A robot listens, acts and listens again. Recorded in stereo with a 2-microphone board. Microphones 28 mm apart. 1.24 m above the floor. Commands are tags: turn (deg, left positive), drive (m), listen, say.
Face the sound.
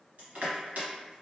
<turn deg="-60"/>
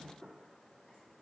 <listen/>
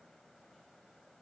<listen/>
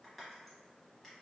<say>Facing the crushing, 1 to 2 m away.</say>